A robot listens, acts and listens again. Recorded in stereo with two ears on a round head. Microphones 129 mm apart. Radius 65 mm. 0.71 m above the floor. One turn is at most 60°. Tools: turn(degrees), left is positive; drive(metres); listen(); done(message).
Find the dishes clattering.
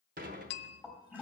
turn(degrees=-60)
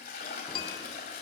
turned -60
listen()
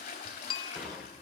done("Facing the dishes clattering.")